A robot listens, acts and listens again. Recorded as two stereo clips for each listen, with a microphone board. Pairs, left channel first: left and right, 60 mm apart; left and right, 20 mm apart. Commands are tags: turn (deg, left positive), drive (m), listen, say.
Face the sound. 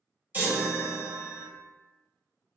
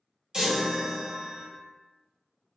<turn deg="-35"/>
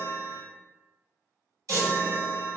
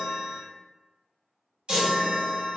<turn deg="-100"/>
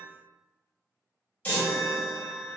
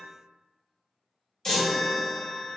<turn deg="30"/>
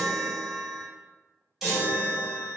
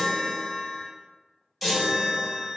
<say>Facing the chime.</say>